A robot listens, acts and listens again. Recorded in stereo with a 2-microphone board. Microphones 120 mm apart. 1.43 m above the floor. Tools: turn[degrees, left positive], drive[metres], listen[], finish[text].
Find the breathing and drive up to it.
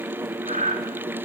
Action: turn[-90]
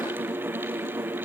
Action: listen[]
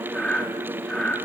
Thought: The breathing is now 10° left.
Action: turn[10]
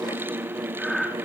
Action: drive[1.0]
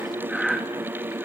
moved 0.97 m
Action: drive[1.0]
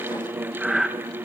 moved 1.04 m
Action: drive[1.0]
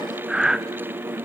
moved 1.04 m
Action: drive[1.0]
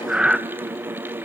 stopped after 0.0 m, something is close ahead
Action: finish[Arrived at the breathing, straight ahead.]